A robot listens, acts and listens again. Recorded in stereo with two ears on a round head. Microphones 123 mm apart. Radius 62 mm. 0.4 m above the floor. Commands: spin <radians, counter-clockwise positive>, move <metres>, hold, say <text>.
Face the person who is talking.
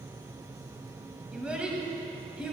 spin -0.52
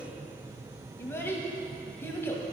spin 0.35
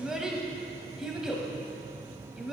say Found it: a child speaking, straight ahead, 1 to 2 m away.